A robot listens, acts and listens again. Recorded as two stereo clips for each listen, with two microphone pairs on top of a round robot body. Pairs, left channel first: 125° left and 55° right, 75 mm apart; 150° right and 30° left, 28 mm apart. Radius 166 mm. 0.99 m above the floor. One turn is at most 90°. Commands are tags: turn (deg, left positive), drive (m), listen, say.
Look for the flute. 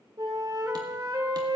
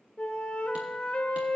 <turn deg="-90"/>
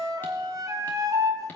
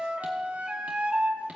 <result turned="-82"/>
<turn deg="-10"/>
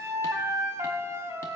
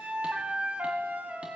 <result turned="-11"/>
<say>Found it: a flute, straight ahead.</say>